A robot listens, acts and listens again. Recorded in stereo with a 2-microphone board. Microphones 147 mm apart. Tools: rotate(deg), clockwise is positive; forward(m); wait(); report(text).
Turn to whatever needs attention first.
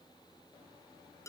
wait()
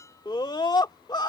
rotate(-30)
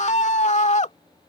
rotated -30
rotate(-120)
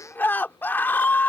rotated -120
rotate(-15)
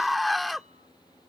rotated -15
report("Facing the scream.")